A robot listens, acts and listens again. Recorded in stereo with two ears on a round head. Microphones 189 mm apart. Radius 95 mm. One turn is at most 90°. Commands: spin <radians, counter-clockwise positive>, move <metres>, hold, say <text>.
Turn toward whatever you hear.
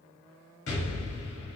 spin 1.05
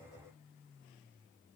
hold
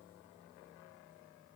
say I heard an explosion, but can't make it out now. It was about straight ahead or 60° left.